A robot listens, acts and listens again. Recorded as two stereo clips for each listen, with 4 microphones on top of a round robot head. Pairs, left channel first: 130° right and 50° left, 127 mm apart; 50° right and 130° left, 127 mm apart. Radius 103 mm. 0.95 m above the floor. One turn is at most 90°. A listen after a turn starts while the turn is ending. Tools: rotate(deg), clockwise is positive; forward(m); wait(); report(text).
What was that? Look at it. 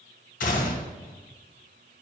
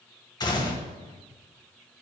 rotate(90)
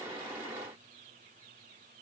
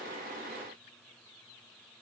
rotate(20)
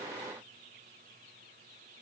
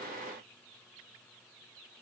report("Facing where the gunshot came from. I can't hear it now.")